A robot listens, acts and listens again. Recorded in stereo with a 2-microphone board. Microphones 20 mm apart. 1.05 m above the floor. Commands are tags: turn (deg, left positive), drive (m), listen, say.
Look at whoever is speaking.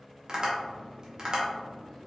<listen/>
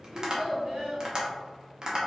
<turn deg="-90"/>
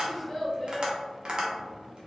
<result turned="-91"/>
<say>Facing the child speaking.</say>